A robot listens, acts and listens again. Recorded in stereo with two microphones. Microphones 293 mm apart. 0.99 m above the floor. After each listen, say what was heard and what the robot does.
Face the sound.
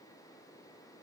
Keep listening.
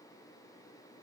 Keep listening.
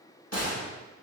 The gunshot: about 55° left or 125° left. Turn 55° left.
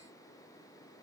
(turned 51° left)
Keep listening.
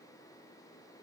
I heard a gunshot, but can't make it out now. It was about 5° left or 70° left.